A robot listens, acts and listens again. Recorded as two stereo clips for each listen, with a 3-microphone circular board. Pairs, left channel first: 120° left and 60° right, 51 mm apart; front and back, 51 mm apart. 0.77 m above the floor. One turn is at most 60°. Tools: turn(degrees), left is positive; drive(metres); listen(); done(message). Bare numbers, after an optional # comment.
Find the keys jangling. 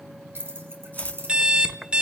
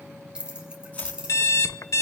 # The keys jangling: 105° right.
turn(-60)
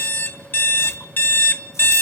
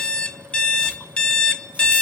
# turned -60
# Nothing new. It was at 45° right.
turn(-45)
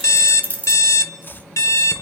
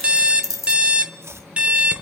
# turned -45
done("Found it: keys jangling, straight ahead, 2 to 4 m away.")